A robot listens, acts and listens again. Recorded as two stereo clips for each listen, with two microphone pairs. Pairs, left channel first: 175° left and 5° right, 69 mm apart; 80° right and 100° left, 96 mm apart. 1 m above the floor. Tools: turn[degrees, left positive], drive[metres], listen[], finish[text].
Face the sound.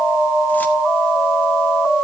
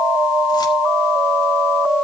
Action: listen[]
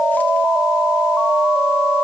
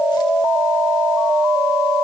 Action: listen[]
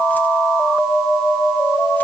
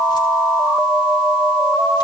Action: finish[I can't make out anything to turn to.]